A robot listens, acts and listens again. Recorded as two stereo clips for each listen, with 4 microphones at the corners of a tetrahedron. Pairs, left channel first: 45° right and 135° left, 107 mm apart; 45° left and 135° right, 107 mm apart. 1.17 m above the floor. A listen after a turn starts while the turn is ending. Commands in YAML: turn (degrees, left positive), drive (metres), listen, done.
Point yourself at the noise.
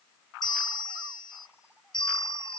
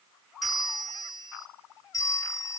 done: "Facing the bell."